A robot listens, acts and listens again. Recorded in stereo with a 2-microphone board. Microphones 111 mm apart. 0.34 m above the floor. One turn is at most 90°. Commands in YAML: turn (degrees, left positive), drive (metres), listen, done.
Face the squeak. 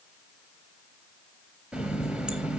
listen: true
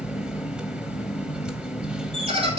turn: -60
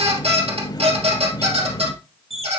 turn: -60
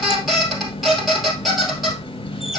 done: "Found it: a squeak, straight ahead, 2 to 4 m away."